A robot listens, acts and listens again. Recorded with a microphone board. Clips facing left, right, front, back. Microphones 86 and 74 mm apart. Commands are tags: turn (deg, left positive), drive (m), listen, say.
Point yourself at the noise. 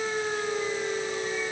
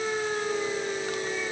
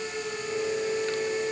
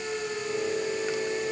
<listen/>
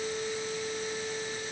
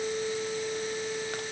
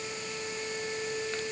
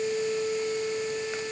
<listen/>
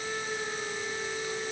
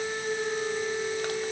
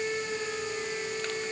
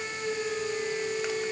<say>I can't make out anything to turn to.</say>